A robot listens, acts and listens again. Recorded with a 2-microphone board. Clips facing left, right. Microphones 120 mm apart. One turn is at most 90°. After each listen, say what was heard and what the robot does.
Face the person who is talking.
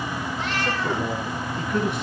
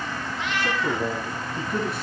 The man speaking: about 30° right or 150° right. Turn 30° right.
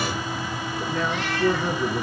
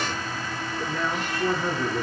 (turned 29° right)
Found it: a man speaking, straight ahead.